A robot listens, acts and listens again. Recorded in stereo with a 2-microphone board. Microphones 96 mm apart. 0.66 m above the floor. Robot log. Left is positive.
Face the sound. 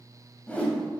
note: The whoosh: about 15° left or 165° left.
cmd yaw +15
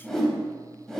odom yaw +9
cmd yaw +30
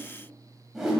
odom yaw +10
end: Facing the whoosh.